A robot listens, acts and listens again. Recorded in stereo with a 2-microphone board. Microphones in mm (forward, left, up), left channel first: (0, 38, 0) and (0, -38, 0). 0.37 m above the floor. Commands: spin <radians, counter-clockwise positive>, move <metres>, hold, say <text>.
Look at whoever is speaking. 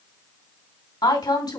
spin 1.22
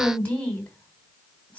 spin 0.35
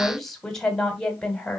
spin 0.17
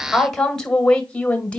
spin 0.26
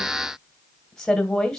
spin 0.17
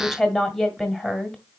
say Facing the woman speaking, 1 to 2 m away.